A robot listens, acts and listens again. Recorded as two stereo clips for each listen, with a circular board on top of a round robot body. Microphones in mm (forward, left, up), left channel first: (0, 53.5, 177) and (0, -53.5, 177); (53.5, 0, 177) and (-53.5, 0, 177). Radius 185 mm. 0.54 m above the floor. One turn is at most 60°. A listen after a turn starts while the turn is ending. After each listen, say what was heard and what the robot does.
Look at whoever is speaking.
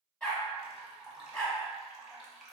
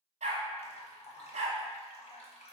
Keep listening.
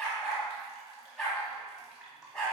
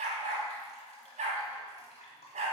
Keep listening.
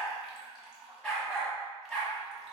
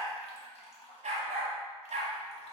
I can't make out anyone speaking, only a dog barking and dripping.